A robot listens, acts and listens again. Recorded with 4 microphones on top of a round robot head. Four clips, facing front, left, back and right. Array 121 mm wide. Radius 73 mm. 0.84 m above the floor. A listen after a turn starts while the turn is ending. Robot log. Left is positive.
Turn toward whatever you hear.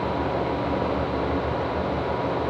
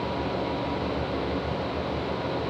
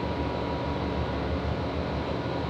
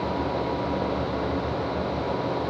cmd idle
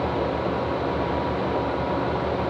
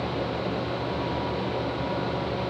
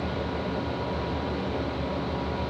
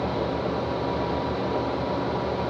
cmd idle
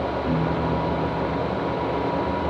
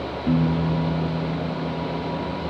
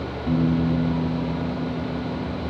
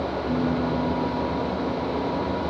note: The piano: 100° left.
cmd yaw +100
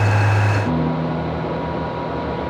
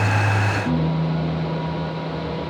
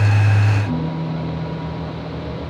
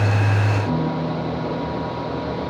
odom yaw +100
note: The piano is now 15° left.
cmd yaw +15
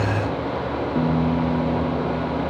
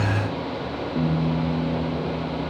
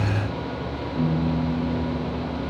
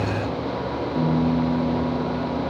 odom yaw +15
end: Facing the piano.